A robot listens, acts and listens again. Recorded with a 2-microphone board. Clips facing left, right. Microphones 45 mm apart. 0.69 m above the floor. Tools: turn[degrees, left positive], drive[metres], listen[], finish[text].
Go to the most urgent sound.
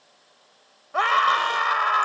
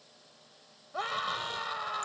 Action: turn[90]
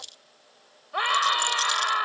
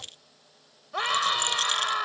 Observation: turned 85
Thought: So it is at 15° left.
Action: turn[15]
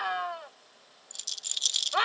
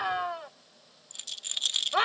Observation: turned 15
Action: drive[1.0]
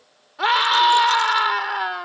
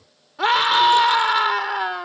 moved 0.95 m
Action: drive[1.0]
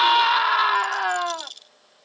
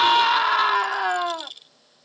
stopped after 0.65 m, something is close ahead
Action: finish[Arrived at the scream, straight ahead.]